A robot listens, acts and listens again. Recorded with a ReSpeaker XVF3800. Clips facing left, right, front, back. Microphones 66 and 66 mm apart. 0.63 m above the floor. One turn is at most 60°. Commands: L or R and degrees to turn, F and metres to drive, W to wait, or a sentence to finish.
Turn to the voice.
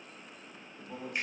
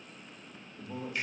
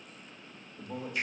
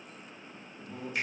Facing the man speaking.